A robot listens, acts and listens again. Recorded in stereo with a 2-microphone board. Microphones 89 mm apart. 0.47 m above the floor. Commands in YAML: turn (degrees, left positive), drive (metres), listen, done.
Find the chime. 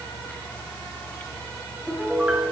listen: true
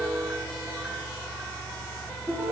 listen: true
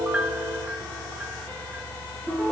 done: "I can't make out a chime, only a piano."